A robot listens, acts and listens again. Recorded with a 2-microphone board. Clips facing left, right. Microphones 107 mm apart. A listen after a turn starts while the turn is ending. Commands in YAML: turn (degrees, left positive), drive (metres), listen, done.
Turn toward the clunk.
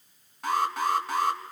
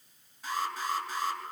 listen: true
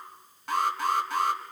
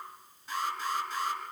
listen: true
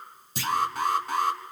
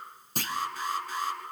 turn: -50
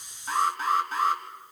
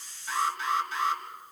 listen: true
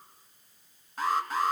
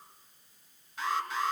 done: "I heard a clunk, but can't make it out now. It was about straight ahead or 80° right."